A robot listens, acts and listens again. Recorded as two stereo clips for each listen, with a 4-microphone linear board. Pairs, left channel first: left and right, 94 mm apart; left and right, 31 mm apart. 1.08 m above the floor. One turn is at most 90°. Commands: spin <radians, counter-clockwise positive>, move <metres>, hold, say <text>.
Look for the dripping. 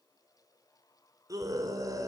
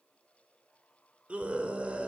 hold
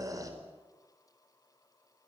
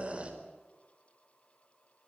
hold
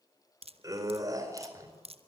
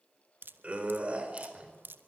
spin -1.57
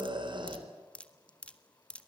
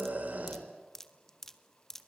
spin 0.17
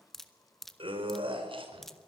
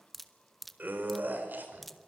say Found it: dripping, straight ahead.